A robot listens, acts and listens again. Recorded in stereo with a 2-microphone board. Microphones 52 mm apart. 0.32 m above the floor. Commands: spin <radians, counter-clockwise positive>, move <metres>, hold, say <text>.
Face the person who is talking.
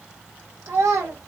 spin -1.05
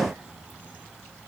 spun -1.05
hold
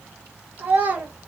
spin -0.61
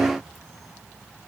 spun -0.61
hold
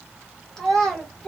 spin 0.17
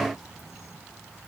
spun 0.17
hold
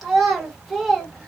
say Facing the child speaking.